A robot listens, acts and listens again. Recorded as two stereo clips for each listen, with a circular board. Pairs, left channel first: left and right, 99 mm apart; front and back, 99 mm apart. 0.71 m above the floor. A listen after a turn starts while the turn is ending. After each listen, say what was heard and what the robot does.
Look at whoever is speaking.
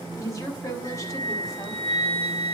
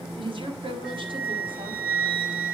The woman speaking: 145° left. Turn 145° left.
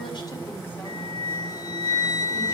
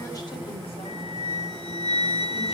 Keep listening.
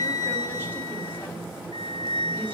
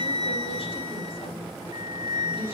The woman speaking is now 20° left. Turn 20° left.
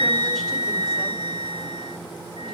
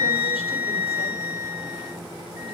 Keep listening.
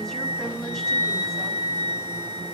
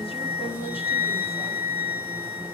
Keep listening.
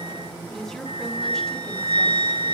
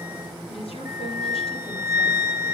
Found it: a woman speaking, straight ahead.